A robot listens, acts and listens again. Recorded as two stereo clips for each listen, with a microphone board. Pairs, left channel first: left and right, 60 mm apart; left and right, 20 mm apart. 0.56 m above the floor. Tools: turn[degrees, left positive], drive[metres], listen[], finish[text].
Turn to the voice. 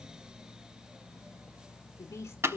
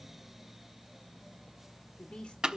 Thought: The woman speaking: about 55° left or 125° left.
Action: turn[55]
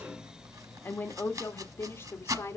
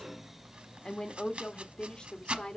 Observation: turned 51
Thought: So it is at 50° left.
Action: turn[50]
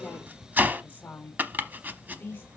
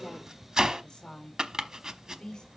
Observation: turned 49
Thought: The woman speaking is now 35° left.
Action: turn[35]
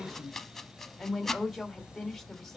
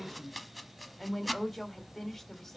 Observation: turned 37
Action: finish[Found it: a woman speaking, straight ahead, 2 to 4 m away.]